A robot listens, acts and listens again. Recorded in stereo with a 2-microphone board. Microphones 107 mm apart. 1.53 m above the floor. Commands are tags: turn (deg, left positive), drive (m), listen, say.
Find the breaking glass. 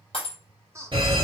<turn deg="60"/>
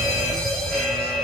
<listen/>
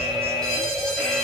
<say>I heard breaking glass, but can't make it out now. It was about straight ahead or 60° left.</say>